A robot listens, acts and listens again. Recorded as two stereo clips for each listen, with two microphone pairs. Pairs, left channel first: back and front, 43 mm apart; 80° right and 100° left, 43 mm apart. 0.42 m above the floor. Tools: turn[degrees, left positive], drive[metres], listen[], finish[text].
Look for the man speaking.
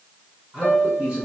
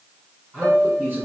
Thought: The man speaking: 70° left.
Action: turn[70]
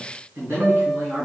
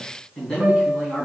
Action: finish[Found it: a man speaking, straight ahead.]